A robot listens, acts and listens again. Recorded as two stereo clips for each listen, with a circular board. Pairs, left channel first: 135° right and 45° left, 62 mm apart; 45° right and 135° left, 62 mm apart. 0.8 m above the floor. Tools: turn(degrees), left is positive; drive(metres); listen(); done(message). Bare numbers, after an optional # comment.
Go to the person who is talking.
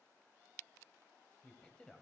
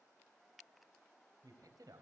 # The man speaking: 150° left.
turn(150)
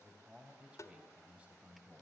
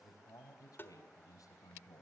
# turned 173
# The man speaking is now 25° right.
turn(-25)
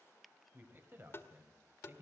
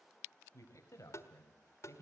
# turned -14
# The man speaking is now 10° right.
turn(-10)
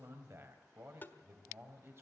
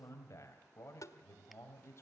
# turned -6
drive(1.0)
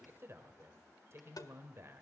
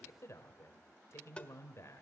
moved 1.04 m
drive(1.0)
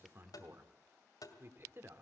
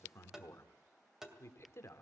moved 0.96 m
drive(1.0)
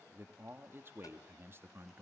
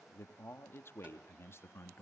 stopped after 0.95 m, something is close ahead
done("I am next to the man speaking.")